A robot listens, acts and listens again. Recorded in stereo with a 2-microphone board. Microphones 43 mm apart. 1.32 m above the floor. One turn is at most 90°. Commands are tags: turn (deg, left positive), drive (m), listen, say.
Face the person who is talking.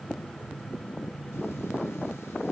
<listen/>
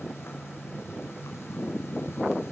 <listen/>
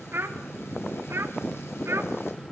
<turn deg="-90"/>
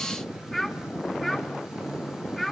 <say>Found it: a child speaking, straight ahead.</say>